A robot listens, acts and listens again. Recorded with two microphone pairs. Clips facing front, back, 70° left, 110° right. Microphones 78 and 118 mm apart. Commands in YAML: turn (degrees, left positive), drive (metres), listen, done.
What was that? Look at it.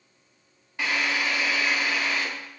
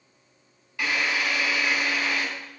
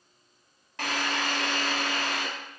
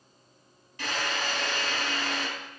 turn: 65
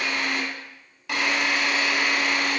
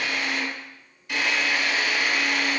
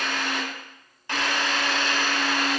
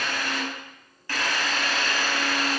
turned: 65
done: "Found it: a drill, straight ahead, 2 to 4 m away."